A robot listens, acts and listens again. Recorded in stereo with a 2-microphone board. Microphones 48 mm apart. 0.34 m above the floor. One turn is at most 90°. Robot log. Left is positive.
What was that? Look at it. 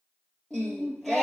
cmd yaw +30
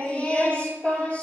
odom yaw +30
note: So it is at 150° left.
cmd yaw +90
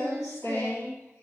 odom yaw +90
note: The singing is now 90° left.
cmd yaw +90
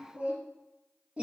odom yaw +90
note: The singing is now 20° right.
cmd yaw -20
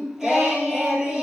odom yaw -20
end: Found it: singing, straight ahead, 2 to 4 m away.